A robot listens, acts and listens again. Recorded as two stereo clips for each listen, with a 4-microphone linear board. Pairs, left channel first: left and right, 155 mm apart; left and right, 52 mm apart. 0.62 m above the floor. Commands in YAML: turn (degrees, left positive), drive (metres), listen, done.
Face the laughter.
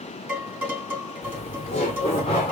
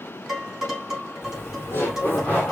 turn: 35
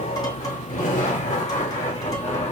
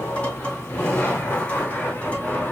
turn: 40
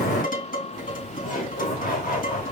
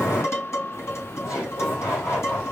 turn: 110
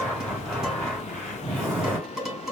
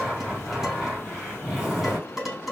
turn: -10
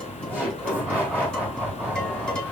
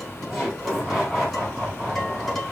done: "Found it: laughter, straight ahead."